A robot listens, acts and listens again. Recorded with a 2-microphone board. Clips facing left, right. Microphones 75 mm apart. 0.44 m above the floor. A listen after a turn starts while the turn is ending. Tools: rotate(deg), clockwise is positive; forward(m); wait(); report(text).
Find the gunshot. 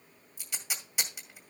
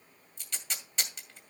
wait()
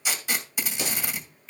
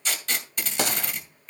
rotate(75)
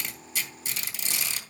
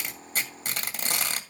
wait()
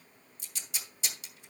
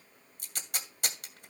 report("I heard a gunshot, but can't make it out now. It was about straight ahead or 30° right.")